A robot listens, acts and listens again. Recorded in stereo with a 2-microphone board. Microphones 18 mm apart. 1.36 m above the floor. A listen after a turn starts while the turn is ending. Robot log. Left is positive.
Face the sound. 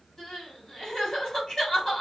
note: The crying: about 40° left or 140° left.
cmd yaw +40
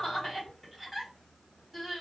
end: Facing the crying.